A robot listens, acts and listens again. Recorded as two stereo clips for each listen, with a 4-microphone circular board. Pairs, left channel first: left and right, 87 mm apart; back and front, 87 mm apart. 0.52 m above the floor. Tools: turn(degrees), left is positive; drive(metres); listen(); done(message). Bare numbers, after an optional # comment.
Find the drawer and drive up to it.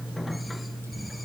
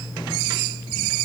listen()
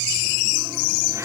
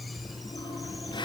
listen()
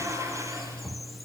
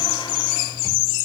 done("I can't make out a drawer to turn to.")